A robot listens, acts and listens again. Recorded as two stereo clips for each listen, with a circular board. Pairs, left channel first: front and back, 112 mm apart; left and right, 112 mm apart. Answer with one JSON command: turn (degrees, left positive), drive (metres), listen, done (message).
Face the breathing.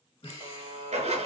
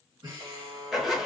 {"turn": -40}
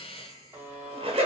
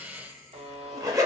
{"turn": -15}
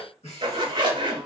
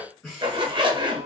{"done": "Found it: breathing, straight ahead, 1 to 2 m away."}